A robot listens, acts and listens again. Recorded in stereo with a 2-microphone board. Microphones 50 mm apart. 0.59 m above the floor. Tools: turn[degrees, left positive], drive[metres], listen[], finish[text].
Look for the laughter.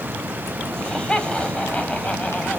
Thought: The laughter: about 25° left or 155° left.
Action: turn[25]
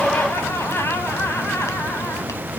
Thought: So it is at 120° left.
Action: turn[120]
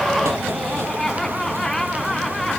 Action: finish[Facing the laughter.]